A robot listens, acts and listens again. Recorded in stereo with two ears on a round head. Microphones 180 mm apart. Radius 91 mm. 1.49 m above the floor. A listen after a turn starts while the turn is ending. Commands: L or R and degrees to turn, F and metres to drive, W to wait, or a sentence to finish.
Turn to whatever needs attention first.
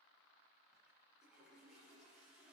W
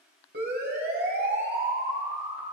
R50
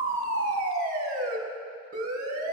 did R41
R85
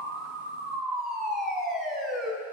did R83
Facing the siren.